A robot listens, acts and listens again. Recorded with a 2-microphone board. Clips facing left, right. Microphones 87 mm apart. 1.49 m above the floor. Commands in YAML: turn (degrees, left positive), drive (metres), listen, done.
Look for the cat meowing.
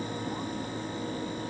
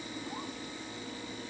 listen: true
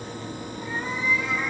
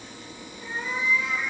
turn: 55
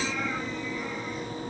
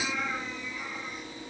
listen: true
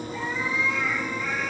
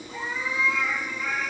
done: "Facing the cat meowing, over 4 m away."